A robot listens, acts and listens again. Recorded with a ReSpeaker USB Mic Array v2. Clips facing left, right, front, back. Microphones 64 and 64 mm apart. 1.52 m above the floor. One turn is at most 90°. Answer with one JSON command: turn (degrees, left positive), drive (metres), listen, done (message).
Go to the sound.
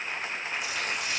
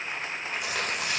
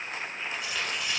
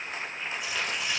{"turn": -90}
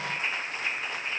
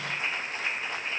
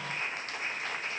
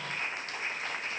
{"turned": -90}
{"listen": true}
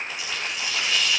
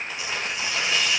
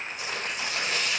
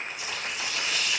{"turn": -30}
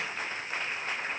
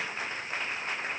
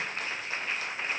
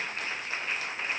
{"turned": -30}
{"listen": true}
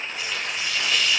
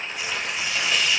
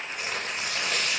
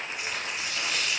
{"turn": -15}
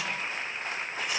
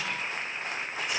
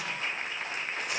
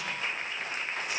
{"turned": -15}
{"listen": true}
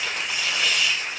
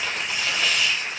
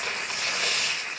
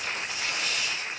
{"drive": 1.0}
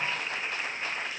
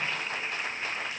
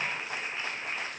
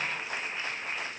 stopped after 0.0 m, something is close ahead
{"listen": true}
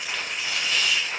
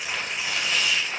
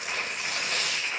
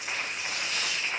{"done": "Something is in my way. I am facing the tearing paper but have not reached it."}